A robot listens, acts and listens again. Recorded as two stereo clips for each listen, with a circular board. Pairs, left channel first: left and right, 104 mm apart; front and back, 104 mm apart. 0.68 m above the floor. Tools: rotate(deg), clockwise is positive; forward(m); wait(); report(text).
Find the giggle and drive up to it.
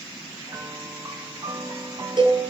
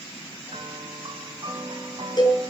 wait()
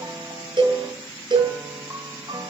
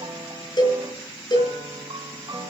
wait()
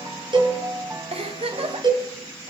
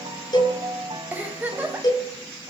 rotate(105)
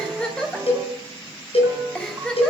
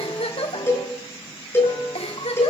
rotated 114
rotate(-10)
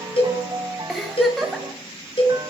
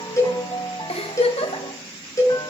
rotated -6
forward(1.0)
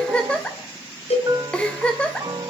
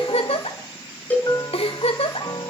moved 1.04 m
rotate(-10)
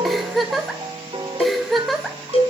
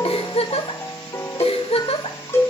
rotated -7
forward(1.0)
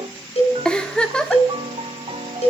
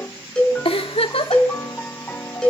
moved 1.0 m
rotate(-10)
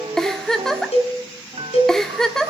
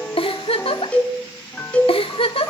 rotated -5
forward(1.0)
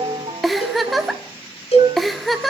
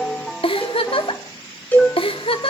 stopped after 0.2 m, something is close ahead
report("Arrived at the giggle, straight ahead.")